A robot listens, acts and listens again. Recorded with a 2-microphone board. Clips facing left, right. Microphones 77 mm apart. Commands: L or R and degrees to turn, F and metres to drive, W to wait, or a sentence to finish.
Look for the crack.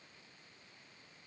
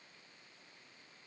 W
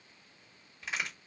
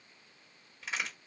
L30
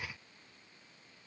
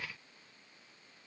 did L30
W
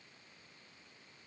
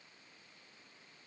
I heard a crack, but can't make it out now. It was about 25° right or 145° left.